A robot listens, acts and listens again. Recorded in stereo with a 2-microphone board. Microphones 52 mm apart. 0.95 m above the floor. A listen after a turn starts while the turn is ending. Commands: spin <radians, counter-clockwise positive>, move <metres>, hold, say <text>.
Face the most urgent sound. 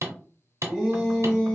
spin -0.52
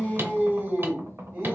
spin -2.36
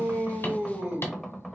spin -0.61
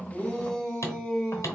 spin 0.26
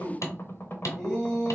say Found it: a shout, straight ahead, 1 to 2 m away.